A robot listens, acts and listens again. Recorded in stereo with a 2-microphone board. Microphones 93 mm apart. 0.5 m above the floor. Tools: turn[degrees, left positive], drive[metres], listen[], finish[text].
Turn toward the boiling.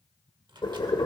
Thought: The boiling: about 60° left or 120° left.
Action: turn[60]
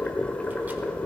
Thought: So it is at 15° left.
Action: turn[15]
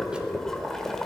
Action: finish[Facing the boiling.]